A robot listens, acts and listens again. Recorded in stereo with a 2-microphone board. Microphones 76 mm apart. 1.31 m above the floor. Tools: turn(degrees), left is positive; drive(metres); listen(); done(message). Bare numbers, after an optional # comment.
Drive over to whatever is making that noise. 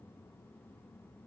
listen()
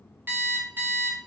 # The alarm clock: about 30° right or 150° right.
turn(-30)
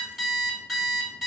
drive(1.0)
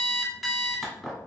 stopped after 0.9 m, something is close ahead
done("I am next to the alarm clock.")